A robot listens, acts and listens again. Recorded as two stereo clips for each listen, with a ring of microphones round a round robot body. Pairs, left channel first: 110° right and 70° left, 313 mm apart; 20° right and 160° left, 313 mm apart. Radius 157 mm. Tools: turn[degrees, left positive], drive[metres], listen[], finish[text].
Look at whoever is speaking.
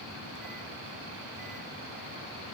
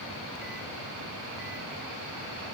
Action: listen[]
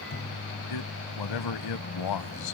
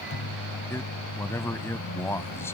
Thought: The man speaking: 105° right.
Action: turn[-105]
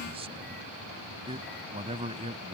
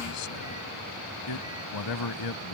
Action: finish[Facing the man speaking.]